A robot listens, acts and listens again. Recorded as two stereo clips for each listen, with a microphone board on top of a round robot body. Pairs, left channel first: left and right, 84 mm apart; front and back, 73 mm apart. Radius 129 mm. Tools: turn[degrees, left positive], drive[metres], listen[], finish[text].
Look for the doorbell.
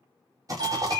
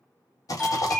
Thought: The doorbell: 70° right.
Action: turn[-70]
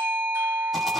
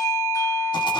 Thought: The doorbell is now 30° right.
Action: turn[-30]
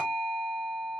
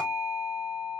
Thought: The doorbell is now 15° right.
Action: turn[-15]
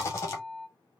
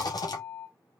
Action: finish[Facing the doorbell, 2 to 4 m away.]